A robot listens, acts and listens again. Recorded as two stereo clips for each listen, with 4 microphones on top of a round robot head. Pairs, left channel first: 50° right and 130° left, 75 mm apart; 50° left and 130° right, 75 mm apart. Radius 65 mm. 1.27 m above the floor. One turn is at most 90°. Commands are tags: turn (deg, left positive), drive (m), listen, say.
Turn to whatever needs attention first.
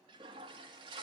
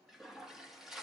<listen/>
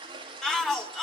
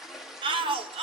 <turn deg="-90"/>
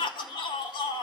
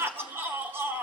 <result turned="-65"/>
<turn deg="-70"/>
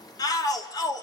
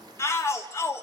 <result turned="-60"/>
<turn deg="-10"/>
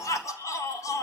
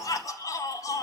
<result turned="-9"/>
<say>Facing the shout, 1 to 2 m away.</say>